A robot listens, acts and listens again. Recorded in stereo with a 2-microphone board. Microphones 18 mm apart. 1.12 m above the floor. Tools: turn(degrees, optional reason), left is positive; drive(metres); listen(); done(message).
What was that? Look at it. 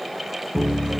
turn(degrees=45, reason="The piano: about 45° left or 135° left.")
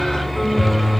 turn(degrees=15, reason="So it is at 15° left.")
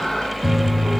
turn(degrees=10, reason="The piano is now 10° left.")
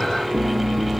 done("Found it: a piano, straight ahead.")